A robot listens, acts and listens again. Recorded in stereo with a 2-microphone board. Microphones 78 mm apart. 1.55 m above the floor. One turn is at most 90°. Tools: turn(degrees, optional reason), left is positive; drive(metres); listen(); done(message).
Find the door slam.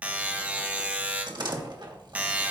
turn(degrees=-70, reason="The door slam: about 70° right or 110° right.")
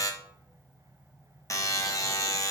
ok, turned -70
listen()
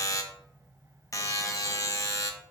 done("I heard a door slam, but can't make it out now. It was about straight ahead or 40° right.")